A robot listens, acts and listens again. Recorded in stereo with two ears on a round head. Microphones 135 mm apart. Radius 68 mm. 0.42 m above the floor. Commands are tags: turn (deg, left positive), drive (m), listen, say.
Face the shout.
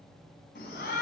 <turn deg="65"/>
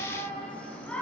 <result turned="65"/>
<turn deg="10"/>
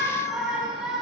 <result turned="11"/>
<say>Facing the shout.</say>